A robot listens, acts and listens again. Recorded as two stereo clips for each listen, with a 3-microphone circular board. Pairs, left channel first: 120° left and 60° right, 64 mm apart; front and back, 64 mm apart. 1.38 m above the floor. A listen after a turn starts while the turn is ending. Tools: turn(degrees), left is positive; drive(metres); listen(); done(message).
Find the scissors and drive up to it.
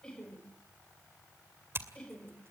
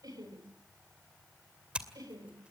turn(degrees=-105)
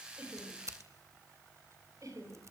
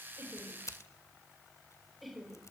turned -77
turn(degrees=-30)
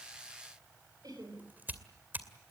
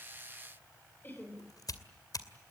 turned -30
drive(metres=1.0)
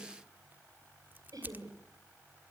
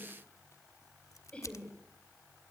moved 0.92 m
drive(metres=1.0)
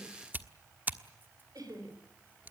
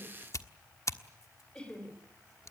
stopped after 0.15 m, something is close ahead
turn(degrees=-10)
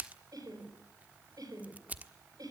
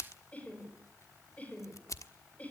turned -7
done("I am next to the scissors.")